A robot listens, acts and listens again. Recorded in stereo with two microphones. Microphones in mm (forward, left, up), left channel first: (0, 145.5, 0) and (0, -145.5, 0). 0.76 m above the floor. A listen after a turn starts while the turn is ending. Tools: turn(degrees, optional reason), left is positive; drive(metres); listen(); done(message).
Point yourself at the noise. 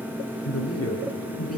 turn(degrees=50, reason="The man speaking: about 50° left or 130° left.")
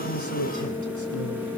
listen()
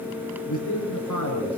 turn(degrees=80, reason="So it is at 80° left.")
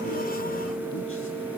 listen()
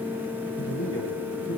turn(degrees=45, reason="The man speaking is now 45° left.")
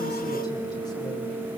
listen()
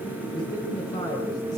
turn(degrees=15, reason="The man speaking is now 15° left.")
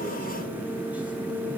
listen()
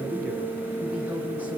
done("Facing the man speaking.")